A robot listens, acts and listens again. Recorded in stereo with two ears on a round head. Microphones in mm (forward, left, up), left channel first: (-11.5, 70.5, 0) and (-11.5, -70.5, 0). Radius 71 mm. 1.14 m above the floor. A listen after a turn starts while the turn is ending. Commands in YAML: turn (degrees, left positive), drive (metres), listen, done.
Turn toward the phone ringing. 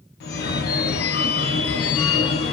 turn: 65
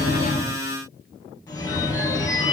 turn: 25
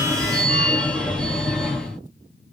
done: "Facing the phone ringing, under 1 m away."